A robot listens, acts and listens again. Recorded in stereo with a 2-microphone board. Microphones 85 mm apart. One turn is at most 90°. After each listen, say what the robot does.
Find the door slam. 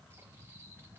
Keep listening.
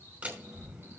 Turn 30° right.
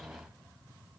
Keep listening.
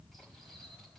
I heard a door slam, but can't make it out now. It was about 15° left or 135° right.